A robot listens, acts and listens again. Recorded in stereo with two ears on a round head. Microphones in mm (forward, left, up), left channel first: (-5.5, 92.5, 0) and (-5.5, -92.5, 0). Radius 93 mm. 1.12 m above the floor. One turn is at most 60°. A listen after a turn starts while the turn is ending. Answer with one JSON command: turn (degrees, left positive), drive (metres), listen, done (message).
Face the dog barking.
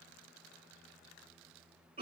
{"listen": true}
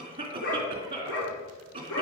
{"turn": 60}
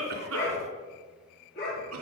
{"turn": 50}
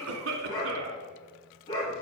{"turn": 20}
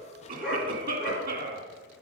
{"done": "Found it: a dog barking, straight ahead, over 4 m away."}